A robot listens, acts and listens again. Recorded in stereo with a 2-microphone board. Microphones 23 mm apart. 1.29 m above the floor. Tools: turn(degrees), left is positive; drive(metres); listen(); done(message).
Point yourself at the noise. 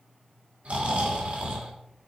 turn(degrees=-65)
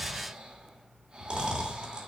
turn(degrees=-45)
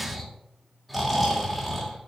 done("Found it: snoring, straight ahead, 2 to 4 m away.")